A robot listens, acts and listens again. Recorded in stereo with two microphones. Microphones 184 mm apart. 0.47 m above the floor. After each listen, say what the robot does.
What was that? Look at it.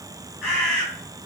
Turn 30° left.
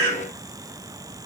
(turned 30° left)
Turn 150° left.
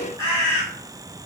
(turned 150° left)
Turn 30° right.
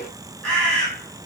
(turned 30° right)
Found it: a bird, straight ahead, 1 to 2 m away.